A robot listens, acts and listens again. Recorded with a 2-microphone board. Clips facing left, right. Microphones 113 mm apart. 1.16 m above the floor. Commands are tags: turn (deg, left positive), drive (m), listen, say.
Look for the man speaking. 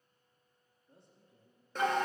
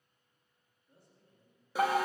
<turn deg="25"/>
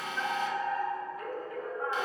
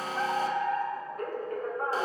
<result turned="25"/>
<listen/>
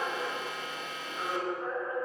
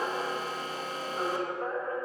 <listen/>
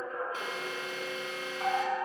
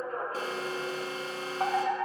<say>I heard a man speaking, but can't make it out now. It was about straight ahead or 130° left.</say>